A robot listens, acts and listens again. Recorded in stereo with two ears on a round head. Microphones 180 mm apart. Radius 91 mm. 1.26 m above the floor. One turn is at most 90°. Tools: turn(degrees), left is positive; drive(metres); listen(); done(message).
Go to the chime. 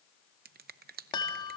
turn(degrees=25)
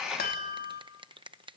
turn(degrees=90)
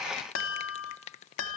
turn(degrees=70)
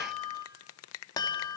turn(degrees=20)
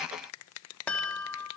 drive(metres=1.0)
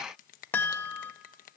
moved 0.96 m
turn(degrees=10)
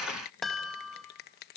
drive(metres=1.0)
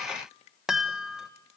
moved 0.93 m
drive(metres=1.0)
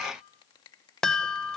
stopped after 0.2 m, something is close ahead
done("Arrived at the chime, straight ahead.")